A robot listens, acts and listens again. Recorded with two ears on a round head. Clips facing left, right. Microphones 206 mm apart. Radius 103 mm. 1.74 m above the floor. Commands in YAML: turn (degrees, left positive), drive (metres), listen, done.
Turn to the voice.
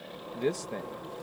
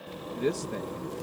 turn: -30
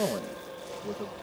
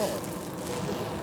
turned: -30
listen: true
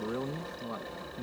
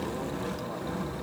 listen: true
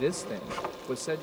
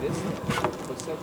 turn: 25
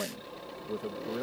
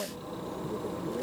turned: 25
listen: true
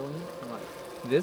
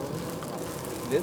turn: 15
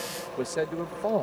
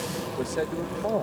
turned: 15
done: "Found it: a man speaking, straight ahead."